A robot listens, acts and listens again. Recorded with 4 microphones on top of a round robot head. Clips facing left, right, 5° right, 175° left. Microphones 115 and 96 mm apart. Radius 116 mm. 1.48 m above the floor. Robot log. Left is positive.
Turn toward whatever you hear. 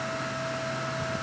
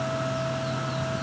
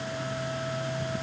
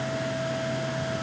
cmd idle
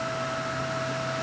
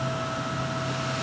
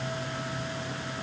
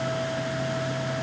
cmd idle
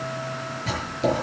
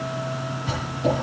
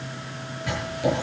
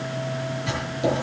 note: The writing: 105° left.
cmd yaw +105
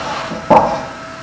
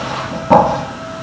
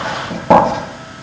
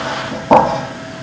note: The writing is now 20° left.
cmd yaw +20
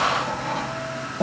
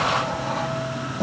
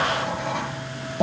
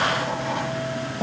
note: The writing is now 10° left.
cmd yaw +10
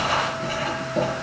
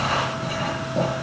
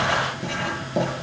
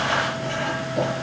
end: Found it: writing, straight ahead.